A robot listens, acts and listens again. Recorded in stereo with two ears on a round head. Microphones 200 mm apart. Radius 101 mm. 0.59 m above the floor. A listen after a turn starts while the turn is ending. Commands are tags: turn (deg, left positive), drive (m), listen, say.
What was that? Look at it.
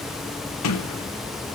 <turn deg="90"/>
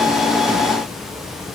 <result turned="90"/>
<listen/>
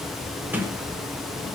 <turn deg="-10"/>
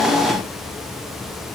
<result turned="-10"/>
<listen/>
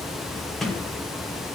<say>Facing the sliding door, 2 to 4 m away.</say>